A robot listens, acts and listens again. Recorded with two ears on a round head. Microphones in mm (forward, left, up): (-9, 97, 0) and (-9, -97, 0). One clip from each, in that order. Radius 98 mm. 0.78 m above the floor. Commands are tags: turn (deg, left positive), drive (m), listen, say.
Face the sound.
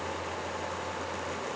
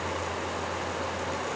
<listen/>
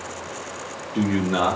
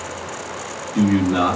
<turn deg="40"/>
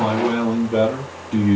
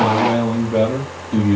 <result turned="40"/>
<turn deg="45"/>
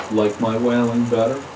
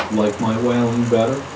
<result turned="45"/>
<turn deg="35"/>
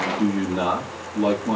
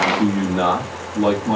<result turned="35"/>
<turn deg="10"/>
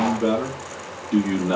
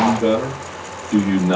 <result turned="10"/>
<say>Facing the man speaking, 1 to 2 m away.</say>